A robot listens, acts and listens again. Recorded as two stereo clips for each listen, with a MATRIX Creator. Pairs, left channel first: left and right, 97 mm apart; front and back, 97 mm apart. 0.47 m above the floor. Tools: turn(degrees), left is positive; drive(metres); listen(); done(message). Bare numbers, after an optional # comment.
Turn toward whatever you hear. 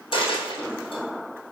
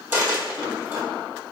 # The dropped coin: 110° left.
turn(110)
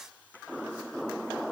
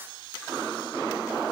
done("I heard a dropped coin from this way, but can't make it out now.")